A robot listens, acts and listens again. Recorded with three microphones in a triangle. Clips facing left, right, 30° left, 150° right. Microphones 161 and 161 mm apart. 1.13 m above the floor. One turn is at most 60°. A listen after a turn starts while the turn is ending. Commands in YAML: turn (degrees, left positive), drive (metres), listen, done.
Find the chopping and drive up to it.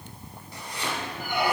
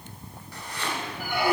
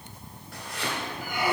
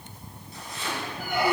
turn: 15
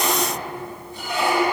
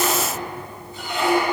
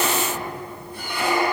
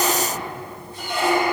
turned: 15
listen: true
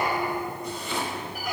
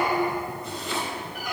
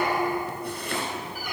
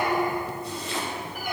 drive: 1.0
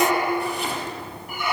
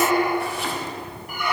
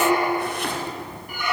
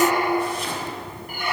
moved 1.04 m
listen: true
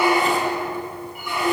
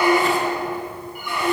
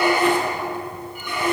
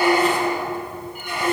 listen: true
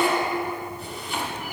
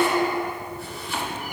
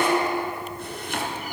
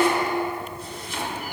drive: 1.0
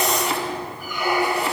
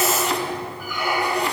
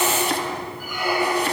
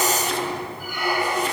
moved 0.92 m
drive: 1.0
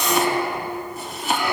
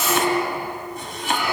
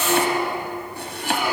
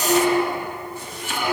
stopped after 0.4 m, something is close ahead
done: "I am next to the chopping."